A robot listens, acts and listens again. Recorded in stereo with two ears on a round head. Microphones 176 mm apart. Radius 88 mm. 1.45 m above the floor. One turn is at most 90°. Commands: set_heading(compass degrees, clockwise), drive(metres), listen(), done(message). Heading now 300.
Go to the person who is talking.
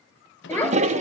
set_heading(270)
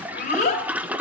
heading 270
set_heading(180)
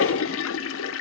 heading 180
set_heading(130)
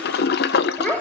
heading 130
drive(1.0)
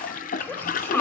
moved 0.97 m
set_heading(120)
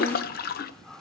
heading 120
listen()
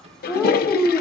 drive(1.0)
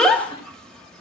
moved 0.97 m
drive(1.0)
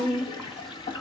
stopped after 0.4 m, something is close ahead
done("I am next to the child speaking.")